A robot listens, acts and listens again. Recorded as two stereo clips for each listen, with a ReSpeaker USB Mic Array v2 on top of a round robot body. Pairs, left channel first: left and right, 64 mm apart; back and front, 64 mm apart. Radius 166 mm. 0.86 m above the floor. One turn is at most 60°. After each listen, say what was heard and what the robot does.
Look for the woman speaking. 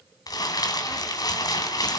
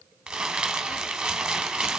Keep listening.
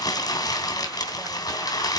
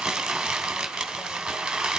Keep listening.
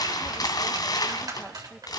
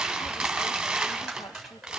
I can't make out a woman speaking to turn to.